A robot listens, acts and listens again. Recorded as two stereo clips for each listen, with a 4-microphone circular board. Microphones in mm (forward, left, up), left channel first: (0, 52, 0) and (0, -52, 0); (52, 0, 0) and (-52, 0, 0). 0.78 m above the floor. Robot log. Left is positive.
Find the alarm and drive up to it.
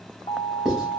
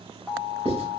note: The alarm: 110° left.
cmd yaw +110
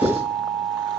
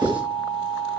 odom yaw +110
note: The alarm is now 30° left.
cmd yaw +30
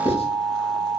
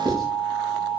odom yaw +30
note: The alarm is now 15° left.
cmd yaw +15
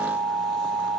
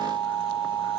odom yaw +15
cmd fwd 1.0
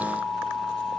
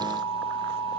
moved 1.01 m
cmd fwd 1.0
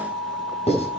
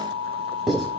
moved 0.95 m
cmd fwd 1.0
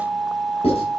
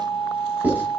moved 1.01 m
cmd fwd 1.0
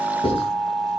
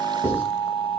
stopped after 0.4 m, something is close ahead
end: Arrived at the alarm, straight ahead.